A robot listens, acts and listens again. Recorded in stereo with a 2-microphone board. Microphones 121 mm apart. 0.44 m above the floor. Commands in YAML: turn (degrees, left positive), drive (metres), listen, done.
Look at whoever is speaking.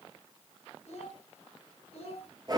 turn: 60
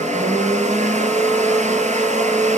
listen: true
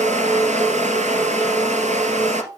turn: -30
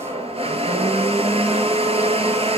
listen: true
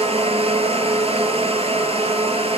listen: true
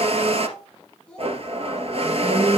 done: "Found it: a child speaking, straight ahead."